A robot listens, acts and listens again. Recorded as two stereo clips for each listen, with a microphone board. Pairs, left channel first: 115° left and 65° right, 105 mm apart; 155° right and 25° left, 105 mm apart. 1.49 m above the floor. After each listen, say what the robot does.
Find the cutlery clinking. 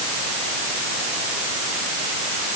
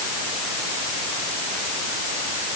Keep listening.
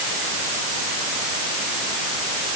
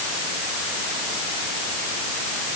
Keep listening.
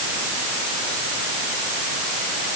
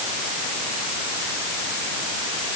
I can't make out cutlery clinking.